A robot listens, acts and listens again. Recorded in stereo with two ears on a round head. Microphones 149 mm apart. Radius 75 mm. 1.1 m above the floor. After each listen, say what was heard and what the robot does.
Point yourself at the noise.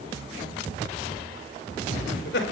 The laughter: about 70° left or 110° left. Turn 70° left.
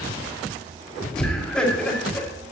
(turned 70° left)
Facing the laughter.